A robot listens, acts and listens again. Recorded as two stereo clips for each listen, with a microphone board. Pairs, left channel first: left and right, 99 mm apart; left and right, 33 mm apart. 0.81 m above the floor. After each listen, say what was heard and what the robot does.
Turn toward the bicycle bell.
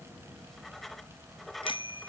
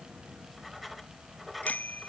The bicycle bell: about 60° left or 120° left. Turn 60° left.
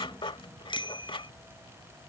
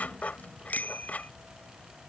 So it is at 55° left. Turn 55° left.
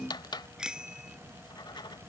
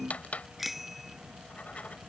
Found it: a bicycle bell, straight ahead.